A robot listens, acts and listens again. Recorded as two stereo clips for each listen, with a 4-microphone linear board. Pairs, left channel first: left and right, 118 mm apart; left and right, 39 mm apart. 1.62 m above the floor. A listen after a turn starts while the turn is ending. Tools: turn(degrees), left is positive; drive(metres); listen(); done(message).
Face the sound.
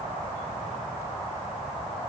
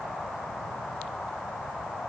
listen()
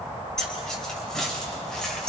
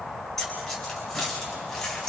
turn(degrees=30)
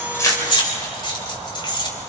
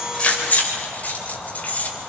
turn(degrees=145)
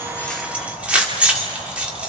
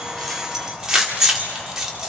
turn(degrees=-10)
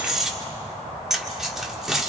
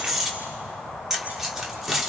done("Found it: keys jangling, straight ahead.")